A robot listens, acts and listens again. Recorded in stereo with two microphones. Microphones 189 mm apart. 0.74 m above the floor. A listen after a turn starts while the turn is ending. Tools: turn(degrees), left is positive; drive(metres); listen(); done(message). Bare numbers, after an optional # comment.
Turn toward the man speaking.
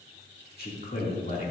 # The man speaking: about 45° left or 135° left.
turn(45)
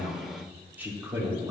# So it is at 20° right.
turn(-20)
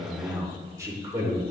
# The man speaking is now 20° right.
turn(-20)
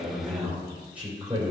# The man speaking is now 10° right.
turn(-10)
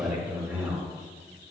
# The man speaking is now 10° right.
turn(-10)
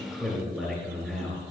done("Found it: a man speaking, straight ahead.")